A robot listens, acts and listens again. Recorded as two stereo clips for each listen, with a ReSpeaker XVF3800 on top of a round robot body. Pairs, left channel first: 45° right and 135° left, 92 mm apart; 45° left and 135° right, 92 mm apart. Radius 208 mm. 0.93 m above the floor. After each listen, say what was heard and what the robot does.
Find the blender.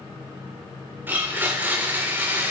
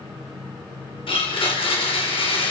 The blender: 65° left. Turn 65° left.
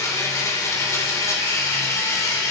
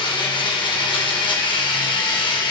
The blender is now 15° left. Turn 15° left.
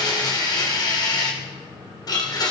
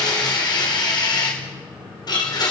Found it: a blender, straight ahead, over 4 m away.